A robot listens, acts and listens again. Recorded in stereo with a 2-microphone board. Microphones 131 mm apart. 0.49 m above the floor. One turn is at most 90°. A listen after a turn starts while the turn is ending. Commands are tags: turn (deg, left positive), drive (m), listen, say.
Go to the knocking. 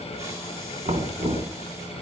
<turn deg="-60"/>
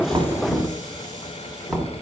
<drive m="1.0"/>
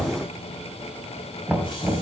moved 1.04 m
<drive m="1.0"/>
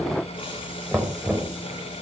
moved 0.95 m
<turn deg="-10"/>
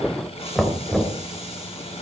<drive m="1.0"/>
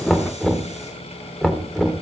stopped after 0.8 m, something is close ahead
<say>I am next to the knocking.</say>